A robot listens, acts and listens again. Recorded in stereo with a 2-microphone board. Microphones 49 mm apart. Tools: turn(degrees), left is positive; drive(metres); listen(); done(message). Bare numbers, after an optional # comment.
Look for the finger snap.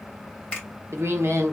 # The finger snap: about 25° left or 155° left.
turn(25)
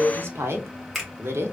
done("Facing the finger snap.")